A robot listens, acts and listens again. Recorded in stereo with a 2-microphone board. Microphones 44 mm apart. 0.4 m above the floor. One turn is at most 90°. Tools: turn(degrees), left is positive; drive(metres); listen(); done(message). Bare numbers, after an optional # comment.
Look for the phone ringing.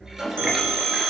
# The phone ringing: about 65° right or 115° right.
turn(-65)
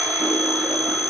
done("Facing the phone ringing, 2 to 4 m away.")